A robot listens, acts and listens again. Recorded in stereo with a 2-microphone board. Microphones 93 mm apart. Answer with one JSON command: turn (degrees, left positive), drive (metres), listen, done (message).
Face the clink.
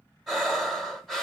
{"listen": true}
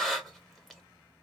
{"listen": true}
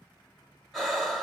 {"done": "I can't make out a clink to turn to."}